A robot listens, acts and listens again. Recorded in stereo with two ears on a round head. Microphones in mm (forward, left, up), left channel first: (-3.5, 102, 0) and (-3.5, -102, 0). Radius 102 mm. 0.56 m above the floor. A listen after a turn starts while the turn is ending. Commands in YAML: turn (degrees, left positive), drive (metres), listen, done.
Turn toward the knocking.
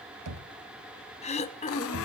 turn: -90
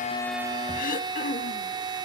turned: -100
turn: 10
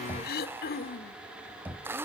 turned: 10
turn: -10
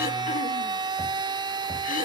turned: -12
listen: true
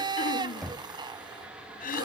done: "Facing the knocking."